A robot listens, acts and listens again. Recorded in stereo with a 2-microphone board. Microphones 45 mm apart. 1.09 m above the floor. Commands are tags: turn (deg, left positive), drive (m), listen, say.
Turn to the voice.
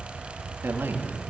<turn deg="-55"/>
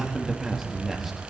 <say>Found it: a man speaking, straight ahead.</say>